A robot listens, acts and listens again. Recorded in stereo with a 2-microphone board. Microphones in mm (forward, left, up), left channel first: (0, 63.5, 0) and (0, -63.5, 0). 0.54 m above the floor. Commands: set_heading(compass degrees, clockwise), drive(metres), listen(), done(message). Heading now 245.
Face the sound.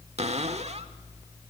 set_heading(300)
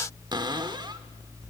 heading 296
set_heading(341)
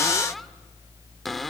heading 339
done("Found it: a cupboard door, straight ahead.")